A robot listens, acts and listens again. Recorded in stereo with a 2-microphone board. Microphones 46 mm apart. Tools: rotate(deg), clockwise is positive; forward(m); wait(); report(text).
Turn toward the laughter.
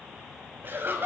rotate(55)
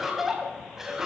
rotate(10)
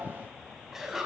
rotate(10)
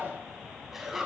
rotate(10)
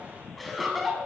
report("Facing the laughter.")